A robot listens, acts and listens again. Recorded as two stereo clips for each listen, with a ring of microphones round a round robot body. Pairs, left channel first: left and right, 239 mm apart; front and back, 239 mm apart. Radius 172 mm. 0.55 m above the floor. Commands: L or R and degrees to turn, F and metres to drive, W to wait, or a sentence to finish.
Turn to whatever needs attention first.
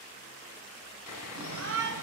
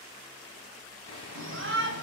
R145
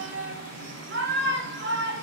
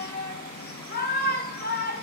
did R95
R50
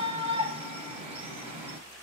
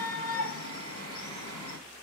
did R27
R25
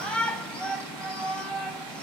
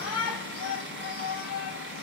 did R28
Found it: a shout, straight ahead.